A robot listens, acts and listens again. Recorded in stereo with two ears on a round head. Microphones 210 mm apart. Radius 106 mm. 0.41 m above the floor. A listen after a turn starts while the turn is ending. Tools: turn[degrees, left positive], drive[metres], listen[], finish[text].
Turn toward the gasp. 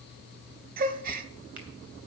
Thought: The gasp: about 40° right or 140° right.
Action: turn[-40]
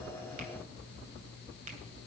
Action: listen[]
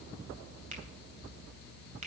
Action: finish[I heard a gasp, but can't make it out now. It was about straight ahead or 100° right.]